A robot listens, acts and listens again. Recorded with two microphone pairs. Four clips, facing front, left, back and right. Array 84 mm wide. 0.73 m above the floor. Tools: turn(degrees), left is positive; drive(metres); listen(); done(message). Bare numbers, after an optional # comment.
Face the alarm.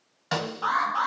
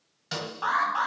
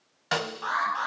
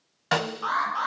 # The alarm: 85° left.
turn(85)
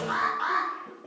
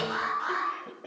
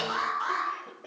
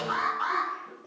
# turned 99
# The alarm is now 15° right.
turn(-15)
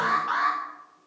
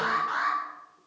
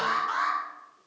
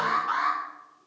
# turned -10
done("Found it: an alarm, straight ahead, over 4 m away.")